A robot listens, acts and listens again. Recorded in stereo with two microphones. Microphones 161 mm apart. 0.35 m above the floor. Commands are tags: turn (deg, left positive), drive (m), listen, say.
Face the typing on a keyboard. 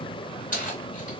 <listen/>
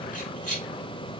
<listen/>
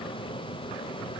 <say>I can't make out typing on a keyboard, only keys jangling.</say>